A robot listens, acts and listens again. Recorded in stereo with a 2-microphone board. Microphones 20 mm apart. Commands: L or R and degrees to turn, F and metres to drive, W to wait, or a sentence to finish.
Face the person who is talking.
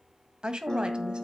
R50
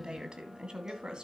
R50
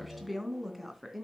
Found it: a woman speaking, straight ahead.